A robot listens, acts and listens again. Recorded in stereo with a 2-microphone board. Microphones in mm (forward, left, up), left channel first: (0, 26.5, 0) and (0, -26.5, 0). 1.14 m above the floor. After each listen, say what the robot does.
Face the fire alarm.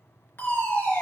Turn 45° left.
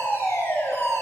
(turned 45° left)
Turn 85° left.
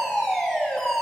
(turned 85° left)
Found it: a fire alarm, straight ahead.